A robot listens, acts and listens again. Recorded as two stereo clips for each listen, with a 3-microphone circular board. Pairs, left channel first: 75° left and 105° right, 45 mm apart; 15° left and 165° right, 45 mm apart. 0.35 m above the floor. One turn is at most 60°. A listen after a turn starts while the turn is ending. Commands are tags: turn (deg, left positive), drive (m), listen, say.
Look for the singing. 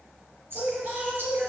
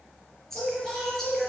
<turn deg="-60"/>
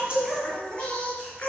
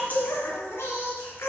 <turn deg="15"/>
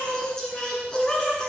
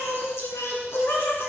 <say>Facing the singing, 2 to 4 m away.</say>